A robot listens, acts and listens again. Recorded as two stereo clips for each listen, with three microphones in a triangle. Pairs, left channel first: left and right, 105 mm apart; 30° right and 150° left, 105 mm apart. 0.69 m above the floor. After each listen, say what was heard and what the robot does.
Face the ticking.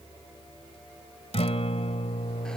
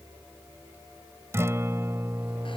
Keep listening.
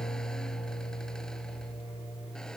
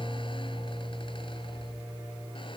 Keep listening.
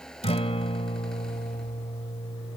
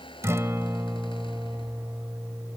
I can't make out ticking to turn to.